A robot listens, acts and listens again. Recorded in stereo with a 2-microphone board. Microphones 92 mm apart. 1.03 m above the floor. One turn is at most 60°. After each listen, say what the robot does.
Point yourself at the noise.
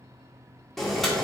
Turn 30° left.
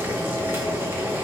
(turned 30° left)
Turn 25° right.
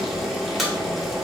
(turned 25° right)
Facing the boiling.